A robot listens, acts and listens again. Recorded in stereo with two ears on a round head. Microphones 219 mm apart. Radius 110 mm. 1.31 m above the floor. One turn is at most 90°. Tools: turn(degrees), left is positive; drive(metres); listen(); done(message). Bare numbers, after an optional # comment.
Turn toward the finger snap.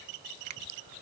turn(-90)
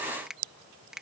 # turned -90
done("Found it: a finger snap, straight ahead.")